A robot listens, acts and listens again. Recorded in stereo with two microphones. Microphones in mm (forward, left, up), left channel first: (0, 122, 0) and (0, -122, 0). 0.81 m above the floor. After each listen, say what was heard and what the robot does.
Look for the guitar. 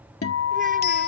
The guitar: about 70° left or 110° left. Turn 70° left.
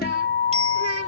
So it is at 40° left. Turn 40° left.
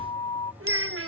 The guitar is now 25° left. Turn 25° left.
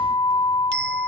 The guitar is now 20° left. Turn 20° left.
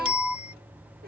Found it: a guitar, straight ahead.